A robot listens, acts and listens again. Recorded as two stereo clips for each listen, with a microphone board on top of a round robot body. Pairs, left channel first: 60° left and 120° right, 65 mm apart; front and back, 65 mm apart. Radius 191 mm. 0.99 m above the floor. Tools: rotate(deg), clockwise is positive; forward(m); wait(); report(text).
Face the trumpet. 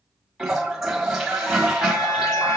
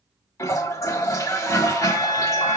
rotate(-25)
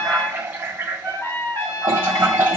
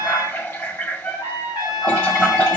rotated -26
report("Found it: a trumpet, straight ahead, 2 to 4 m away.")